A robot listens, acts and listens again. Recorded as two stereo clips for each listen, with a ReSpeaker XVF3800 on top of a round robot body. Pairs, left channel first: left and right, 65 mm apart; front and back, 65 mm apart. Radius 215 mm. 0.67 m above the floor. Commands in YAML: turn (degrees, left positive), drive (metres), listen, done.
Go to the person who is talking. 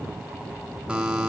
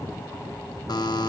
listen: true
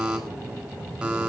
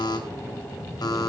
listen: true
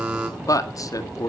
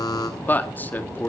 turn: 60
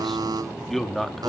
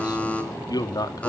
drive: 1.0
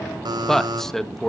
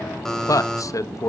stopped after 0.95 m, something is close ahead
done: "I am next to the man speaking."